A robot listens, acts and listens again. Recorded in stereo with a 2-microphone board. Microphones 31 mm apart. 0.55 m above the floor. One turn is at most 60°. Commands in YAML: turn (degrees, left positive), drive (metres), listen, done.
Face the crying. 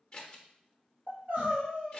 turn: -60
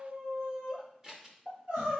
turn: -60
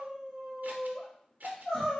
turn: 15
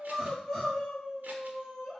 done: "Found it: crying, straight ahead, 1 to 2 m away."